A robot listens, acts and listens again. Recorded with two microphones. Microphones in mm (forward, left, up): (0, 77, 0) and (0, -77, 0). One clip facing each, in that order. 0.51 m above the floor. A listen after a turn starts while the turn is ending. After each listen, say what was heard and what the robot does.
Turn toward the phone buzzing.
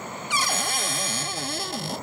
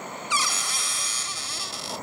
Keep listening.
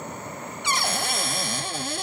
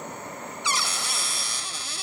Keep listening.
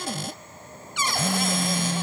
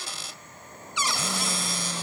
The phone buzzing: about 15° left or 165° left. Turn 15° left.
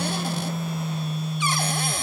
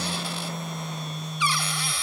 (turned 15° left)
Facing the phone buzzing.